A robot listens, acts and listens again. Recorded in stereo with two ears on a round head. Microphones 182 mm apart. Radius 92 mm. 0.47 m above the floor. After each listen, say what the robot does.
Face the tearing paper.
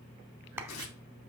Turn 90° left.
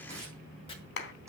Turn 15° right.
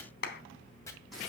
Found it: tearing paper, straight ahead.